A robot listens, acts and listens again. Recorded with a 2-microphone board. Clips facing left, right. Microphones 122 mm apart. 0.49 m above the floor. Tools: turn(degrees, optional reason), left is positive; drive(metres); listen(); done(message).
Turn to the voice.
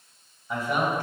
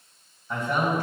turn(degrees=30)
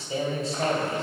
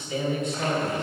turn(degrees=145, reason="So it is at 145° left.")
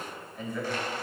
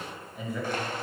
done("Facing the man speaking.")